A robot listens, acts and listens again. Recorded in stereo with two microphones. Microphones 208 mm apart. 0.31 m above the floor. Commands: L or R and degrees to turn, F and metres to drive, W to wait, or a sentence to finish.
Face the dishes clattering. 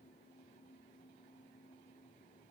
W
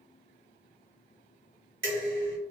R65
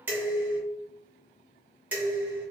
R10
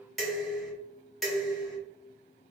Found it: dishes clattering, straight ahead, 1 to 2 m away.